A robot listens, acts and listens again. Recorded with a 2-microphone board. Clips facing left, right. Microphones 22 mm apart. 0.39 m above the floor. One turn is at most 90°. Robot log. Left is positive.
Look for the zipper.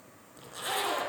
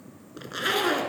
note: The zipper: about 45° right or 135° right.
cmd yaw -45
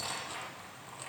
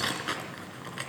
note: So it is at 85° right.
cmd yaw -85
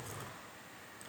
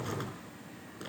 cmd idle
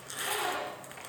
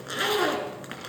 note: The zipper is now 35° right.
cmd yaw -35
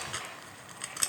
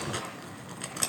end: Found it: a zipper, straight ahead, 2 to 4 m away.